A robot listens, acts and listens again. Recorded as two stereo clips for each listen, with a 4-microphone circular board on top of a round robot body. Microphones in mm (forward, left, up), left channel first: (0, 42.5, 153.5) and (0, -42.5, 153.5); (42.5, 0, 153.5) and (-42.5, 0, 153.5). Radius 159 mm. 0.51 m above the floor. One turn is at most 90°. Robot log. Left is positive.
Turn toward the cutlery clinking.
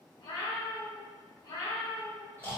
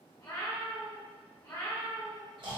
cmd idle
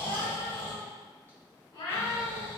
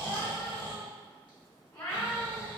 cmd idle
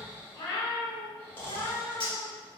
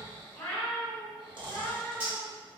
note: The cutlery clinking: 110° left.
cmd yaw +90
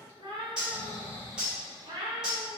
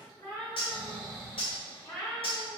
note: The cutlery clinking is now 10° right.
cmd yaw -10
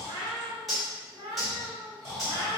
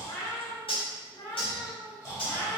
end: Facing the cutlery clinking.